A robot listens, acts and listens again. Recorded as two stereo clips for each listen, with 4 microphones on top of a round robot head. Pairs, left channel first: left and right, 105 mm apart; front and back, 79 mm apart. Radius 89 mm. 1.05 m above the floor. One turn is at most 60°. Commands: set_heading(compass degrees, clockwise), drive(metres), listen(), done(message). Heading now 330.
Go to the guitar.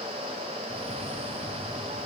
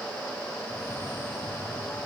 listen()
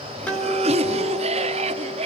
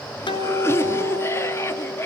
set_heading(320)
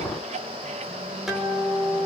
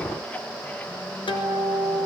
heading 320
drive(1.0)
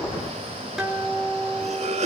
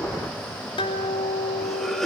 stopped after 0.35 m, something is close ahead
done("Something is in my way. I am facing the guitar but have not reached it.")